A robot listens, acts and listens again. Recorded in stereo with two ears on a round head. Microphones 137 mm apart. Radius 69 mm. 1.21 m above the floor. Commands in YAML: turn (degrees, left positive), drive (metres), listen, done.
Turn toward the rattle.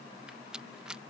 turn: -30
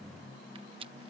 turn: -145
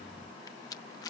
turn: 25
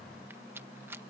turn: -15
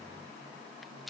listen: true
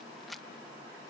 done: "Found it: a rattle, straight ahead."